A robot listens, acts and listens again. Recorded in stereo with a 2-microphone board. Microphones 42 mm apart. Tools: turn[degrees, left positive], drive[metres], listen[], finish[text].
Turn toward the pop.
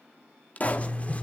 Thought: The pop: about 35° left or 145° left.
Action: turn[35]
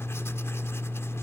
Action: listen[]
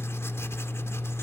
Action: finish[I heard a pop, but can't make it out now. It was about straight ahead or 110° left.]